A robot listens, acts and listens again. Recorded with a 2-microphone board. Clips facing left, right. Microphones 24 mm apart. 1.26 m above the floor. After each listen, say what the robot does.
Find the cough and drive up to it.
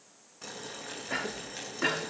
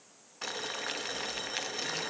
Turn 90° left.
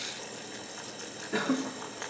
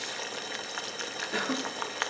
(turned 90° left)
Drive 1.0 m forward.
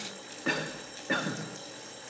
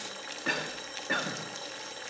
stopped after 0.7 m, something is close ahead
Blocked. The cough is further on, straight ahead.